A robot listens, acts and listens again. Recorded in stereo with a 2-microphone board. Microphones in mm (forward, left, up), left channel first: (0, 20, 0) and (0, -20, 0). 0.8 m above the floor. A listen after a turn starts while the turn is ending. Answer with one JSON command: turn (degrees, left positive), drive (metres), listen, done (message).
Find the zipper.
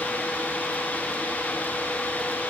{"listen": true}
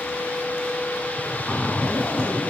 {"turn": 20}
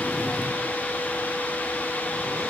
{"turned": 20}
{"listen": true}
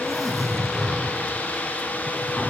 {"done": "Found it: a zipper, straight ahead, 2 to 4 m away."}